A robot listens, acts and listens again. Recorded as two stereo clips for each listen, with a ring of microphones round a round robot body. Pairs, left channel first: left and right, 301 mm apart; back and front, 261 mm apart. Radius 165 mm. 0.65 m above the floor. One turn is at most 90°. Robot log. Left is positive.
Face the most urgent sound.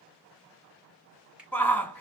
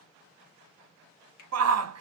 end: Found it: a shout, straight ahead, 1 to 2 m away.